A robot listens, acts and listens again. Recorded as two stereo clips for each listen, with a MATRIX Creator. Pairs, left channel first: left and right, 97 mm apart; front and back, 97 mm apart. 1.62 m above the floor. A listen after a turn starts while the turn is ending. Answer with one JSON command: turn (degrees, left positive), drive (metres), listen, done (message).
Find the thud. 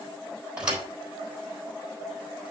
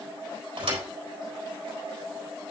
{"turn": -165}
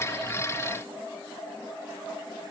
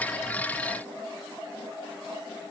{"done": "I heard a thud from this way, but can't make it out now."}